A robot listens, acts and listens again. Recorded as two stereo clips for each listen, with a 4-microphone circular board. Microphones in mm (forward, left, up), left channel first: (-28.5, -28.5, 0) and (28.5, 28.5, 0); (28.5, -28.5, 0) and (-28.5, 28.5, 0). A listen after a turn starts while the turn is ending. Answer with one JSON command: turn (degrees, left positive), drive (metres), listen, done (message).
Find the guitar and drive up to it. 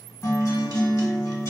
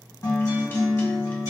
{"turn": -85}
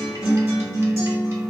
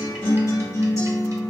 {"drive": 1.0}
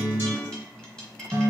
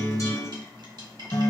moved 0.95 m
{"turn": -10}
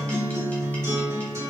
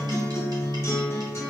{"drive": 1.0}
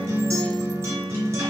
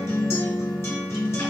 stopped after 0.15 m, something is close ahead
{"done": "I am next to the guitar."}